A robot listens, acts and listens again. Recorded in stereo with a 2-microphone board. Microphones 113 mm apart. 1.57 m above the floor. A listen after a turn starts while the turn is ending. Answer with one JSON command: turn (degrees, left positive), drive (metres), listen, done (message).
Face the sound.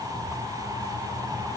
{"listen": true}
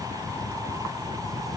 {"listen": true}
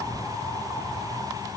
{"done": "I can't make out anything to turn to."}